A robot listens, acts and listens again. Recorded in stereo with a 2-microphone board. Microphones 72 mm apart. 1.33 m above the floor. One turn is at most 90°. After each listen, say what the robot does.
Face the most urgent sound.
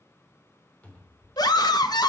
Turn 65° left.
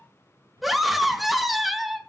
Found it: a scream, straight ahead, 1 to 2 m away.